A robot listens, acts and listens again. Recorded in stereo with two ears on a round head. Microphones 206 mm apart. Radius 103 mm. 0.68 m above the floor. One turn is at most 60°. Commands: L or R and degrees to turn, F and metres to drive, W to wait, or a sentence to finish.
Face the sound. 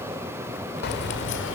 L55
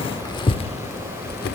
L45
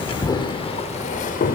L35
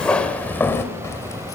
L15
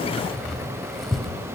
Found it: keys jangling, straight ahead, 2 to 4 m away.